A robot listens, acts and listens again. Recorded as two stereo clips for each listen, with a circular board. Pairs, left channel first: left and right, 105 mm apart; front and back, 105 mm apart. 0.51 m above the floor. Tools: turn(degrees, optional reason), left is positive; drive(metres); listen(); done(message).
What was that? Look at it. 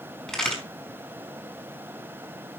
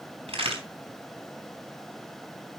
turn(degrees=170, reason="The crack: 170° left.")
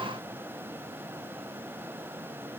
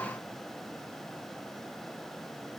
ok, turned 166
done("Facing where the crack came from. I can't hear it now.")